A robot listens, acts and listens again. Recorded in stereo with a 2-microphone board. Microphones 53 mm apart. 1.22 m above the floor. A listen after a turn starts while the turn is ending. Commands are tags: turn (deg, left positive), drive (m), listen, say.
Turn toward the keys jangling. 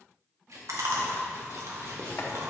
<turn deg="-90"/>
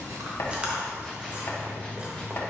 <listen/>
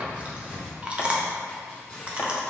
<say>Facing the keys jangling, 2 to 4 m away.</say>